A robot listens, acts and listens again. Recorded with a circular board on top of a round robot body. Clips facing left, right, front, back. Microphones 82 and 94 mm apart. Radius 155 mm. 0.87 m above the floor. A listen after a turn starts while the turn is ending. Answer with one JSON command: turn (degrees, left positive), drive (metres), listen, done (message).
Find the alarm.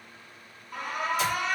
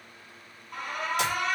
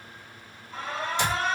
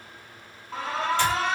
{"turn": 180}
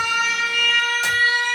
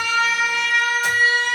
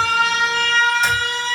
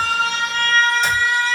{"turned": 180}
{"turn": -20}
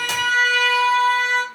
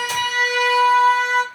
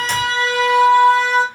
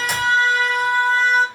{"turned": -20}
{"done": "Found it: an alarm, straight ahead, 1 to 2 m away."}